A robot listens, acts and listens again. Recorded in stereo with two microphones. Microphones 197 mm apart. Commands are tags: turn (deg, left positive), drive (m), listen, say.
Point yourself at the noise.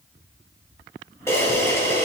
<turn deg="30"/>
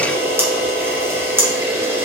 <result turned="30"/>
<turn deg="-15"/>
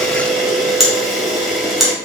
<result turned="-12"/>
<say>Facing the camera shutter, 1 to 2 m away.</say>